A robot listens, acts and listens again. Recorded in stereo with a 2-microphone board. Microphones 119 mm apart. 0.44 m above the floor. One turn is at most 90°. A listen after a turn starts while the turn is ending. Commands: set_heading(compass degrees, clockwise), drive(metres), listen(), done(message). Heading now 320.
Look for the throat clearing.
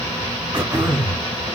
set_heading(5)
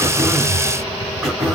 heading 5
done("Facing the throat clearing.")